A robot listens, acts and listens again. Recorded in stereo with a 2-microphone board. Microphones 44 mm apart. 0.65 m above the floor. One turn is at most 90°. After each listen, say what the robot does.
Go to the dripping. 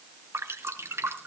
Turn 90° right.
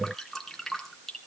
Drive 1.0 m forward.
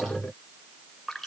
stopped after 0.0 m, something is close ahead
Blocked. The dripping is further on, straight ahead.